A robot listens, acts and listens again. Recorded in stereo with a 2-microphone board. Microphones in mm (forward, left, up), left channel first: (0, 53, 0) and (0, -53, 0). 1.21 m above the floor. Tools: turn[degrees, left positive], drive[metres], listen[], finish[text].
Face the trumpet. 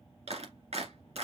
Action: listen[]
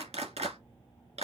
Action: listen[]
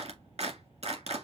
Action: finish[I can't make out a trumpet, only a clap.]